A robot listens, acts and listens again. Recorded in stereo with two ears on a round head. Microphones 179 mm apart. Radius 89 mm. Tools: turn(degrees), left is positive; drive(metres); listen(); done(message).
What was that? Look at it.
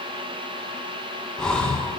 turn(degrees=30)
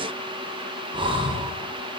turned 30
turn(degrees=-25)
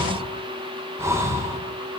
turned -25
turn(degrees=-15)
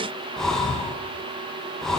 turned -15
done("Found it: breathing, straight ahead.")